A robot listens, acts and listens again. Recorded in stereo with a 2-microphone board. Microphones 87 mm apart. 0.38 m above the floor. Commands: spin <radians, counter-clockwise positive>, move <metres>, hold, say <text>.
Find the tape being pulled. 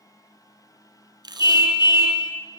spin -0.96
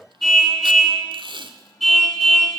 spin -1.22
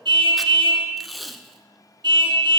say Found it: tape being pulled, straight ahead, under 1 m away.